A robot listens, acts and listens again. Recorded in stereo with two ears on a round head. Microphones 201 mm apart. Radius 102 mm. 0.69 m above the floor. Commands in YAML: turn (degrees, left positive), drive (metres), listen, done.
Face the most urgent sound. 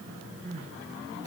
turn: -35
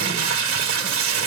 listen: true
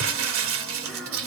listen: true
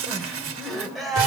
done: "Facing the crying, 2 to 4 m away."